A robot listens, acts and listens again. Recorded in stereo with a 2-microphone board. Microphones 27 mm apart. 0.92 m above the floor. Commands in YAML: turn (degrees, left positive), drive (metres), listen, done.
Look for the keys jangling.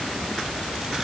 listen: true
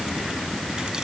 listen: true
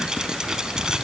done: "I can't make out keys jangling to turn to."